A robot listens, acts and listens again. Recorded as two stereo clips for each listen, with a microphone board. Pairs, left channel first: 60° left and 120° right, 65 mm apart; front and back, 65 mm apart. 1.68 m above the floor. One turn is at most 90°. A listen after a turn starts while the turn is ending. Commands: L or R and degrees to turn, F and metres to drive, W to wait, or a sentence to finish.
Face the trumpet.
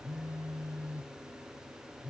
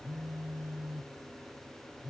W
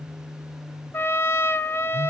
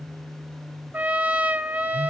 L90
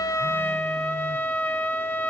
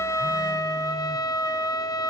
Facing the trumpet, under 1 m away.